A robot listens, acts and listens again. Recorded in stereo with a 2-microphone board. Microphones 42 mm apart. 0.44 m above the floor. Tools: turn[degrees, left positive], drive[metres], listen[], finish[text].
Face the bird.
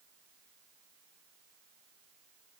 Action: listen[]
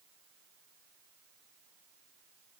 Action: listen[]
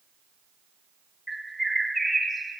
Action: turn[30]
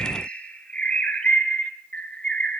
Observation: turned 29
Thought: So it is at 150° left.
Action: turn[150]
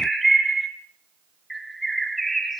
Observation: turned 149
Action: finish[Facing the bird, 2 to 4 m away.]